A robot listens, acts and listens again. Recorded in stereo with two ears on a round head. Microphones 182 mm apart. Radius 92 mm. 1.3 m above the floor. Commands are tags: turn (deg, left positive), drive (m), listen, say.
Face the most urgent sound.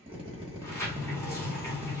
<listen/>
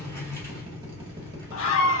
<turn deg="65"/>
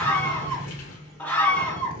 <say>Found it: a scream, straight ahead, under 1 m away.</say>